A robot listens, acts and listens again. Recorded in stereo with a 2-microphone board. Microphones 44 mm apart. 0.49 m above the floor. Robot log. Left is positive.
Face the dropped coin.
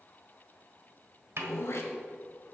cmd idle
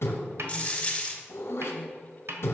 note: The dropped coin: about 25° left or 155° left.
cmd yaw +25
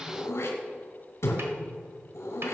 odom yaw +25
cmd idle
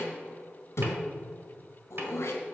end: I heard a dropped coin, but can't make it out now. It was about straight ahead or 130° left.